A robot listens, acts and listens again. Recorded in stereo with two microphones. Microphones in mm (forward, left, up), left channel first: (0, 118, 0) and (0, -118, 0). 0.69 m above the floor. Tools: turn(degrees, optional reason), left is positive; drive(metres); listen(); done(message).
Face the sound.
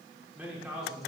turn(degrees=30)
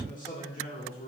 turn(degrees=140, reason="So it is at 140° left.")
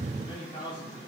turn(degrees=20, reason="The man speaking is now 20° left.")
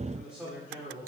turn(degrees=-10, reason="The man speaking is now 10° right.")
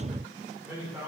turn(degrees=-10, reason="The man speaking is now 10° right.")
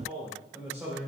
done("Facing the man speaking, 2 to 4 m away.")